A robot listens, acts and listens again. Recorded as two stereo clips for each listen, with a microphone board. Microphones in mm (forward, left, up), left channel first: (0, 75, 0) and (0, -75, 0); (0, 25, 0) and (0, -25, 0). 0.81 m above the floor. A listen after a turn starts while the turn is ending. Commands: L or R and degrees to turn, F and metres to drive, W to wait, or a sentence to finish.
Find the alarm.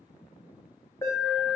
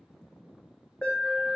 L20
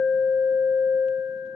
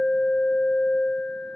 L135
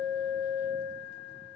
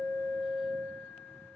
L35
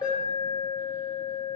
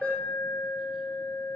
L10
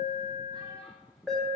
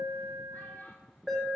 Found it: an alarm, straight ahead, 1 to 2 m away.